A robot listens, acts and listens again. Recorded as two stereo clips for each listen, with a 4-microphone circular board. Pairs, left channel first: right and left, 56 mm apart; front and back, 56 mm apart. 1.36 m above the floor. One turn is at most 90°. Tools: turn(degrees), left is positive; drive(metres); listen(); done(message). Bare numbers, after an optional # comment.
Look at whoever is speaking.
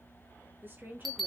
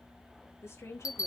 # The woman speaking: 35° left.
turn(35)
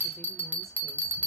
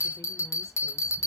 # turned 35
listen()
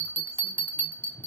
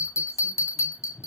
listen()
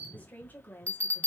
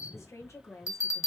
# The woman speaking is now 35° right.
turn(-35)
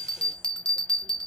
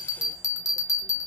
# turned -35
listen()
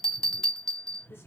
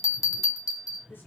listen()
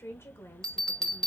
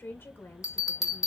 # The woman speaking is now 45° right.
turn(-45)
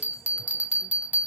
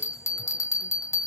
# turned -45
listen()
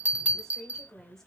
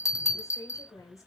done("Facing the woman speaking.")